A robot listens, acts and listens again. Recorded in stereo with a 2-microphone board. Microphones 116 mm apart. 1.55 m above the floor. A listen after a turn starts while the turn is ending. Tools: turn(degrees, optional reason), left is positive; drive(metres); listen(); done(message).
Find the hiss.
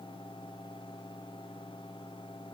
listen()
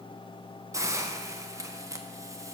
turn(degrees=-25, reason="The hiss: about 25° right or 155° right.")
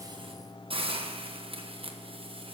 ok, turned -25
turn(degrees=-130, reason="So it is at 130° right.")
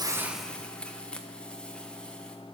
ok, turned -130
turn(degrees=10, reason="The hiss is now 10° left.")
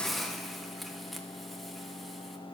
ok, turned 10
done("Found it: a hiss, straight ahead.")